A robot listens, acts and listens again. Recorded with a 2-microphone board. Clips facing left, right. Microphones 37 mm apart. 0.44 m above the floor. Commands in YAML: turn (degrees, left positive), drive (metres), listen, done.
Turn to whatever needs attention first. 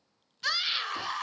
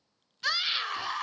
turn: -30
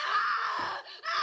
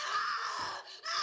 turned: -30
turn: 25
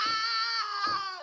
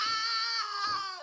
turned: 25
turn: 10
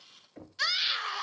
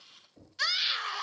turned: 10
done: "Facing the scream, 1 to 2 m away."